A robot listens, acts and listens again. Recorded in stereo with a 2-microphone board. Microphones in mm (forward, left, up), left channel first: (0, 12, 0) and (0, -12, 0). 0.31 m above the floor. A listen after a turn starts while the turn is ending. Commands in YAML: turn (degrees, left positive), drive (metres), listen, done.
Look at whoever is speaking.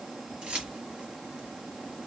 listen: true
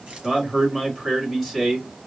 turn: 30
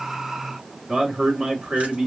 turn: -30
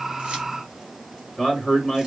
turn: 15
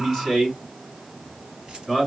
done: "Found it: a man speaking, straight ahead."